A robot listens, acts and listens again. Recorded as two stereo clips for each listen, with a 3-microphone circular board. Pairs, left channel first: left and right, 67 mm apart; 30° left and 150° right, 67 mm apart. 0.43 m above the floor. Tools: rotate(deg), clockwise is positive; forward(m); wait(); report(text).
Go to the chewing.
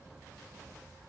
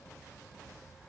wait()
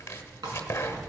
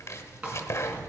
rotate(85)
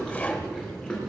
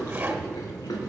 rotate(-10)
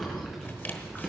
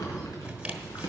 forward(1.0)
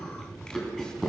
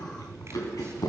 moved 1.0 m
rotate(-10)
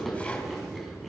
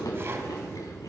forward(1.0)
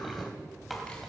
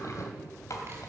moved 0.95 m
forward(1.0)
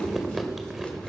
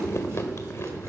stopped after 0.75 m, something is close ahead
report("I am next to the chewing.")